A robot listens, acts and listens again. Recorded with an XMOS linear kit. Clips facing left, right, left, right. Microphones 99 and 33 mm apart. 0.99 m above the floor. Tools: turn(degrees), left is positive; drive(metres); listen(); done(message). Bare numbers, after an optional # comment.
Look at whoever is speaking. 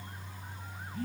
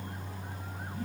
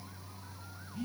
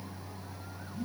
listen()
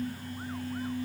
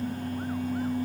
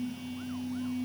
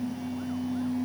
listen()
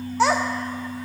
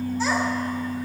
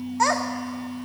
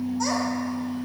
# The child speaking: about 70° left or 110° left.
turn(70)
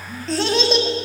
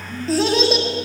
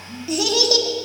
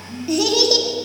done("Facing the child speaking, 1 to 2 m away.")